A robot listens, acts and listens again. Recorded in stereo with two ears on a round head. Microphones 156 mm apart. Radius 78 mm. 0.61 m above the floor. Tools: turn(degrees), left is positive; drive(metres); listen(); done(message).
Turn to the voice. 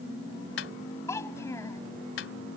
turn(degrees=15)
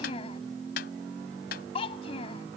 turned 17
turn(degrees=145)
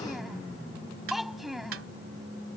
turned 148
done("Facing the child speaking.")